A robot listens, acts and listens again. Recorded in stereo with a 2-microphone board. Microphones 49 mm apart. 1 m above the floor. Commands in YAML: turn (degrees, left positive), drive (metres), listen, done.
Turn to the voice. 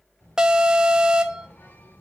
turn: 90
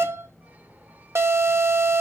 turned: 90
done: "Facing the child speaking."